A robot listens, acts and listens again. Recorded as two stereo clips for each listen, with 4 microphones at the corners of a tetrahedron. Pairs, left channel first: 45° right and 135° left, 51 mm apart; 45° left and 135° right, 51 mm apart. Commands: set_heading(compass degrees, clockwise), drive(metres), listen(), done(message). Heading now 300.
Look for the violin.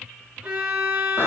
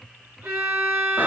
set_heading(100)
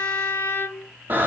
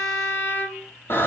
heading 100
done("Facing the violin.")